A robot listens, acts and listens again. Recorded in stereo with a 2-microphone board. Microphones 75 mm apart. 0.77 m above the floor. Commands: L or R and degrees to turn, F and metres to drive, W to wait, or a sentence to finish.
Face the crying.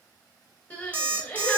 L30
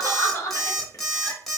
L135
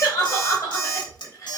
L55
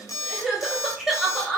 Facing the crying.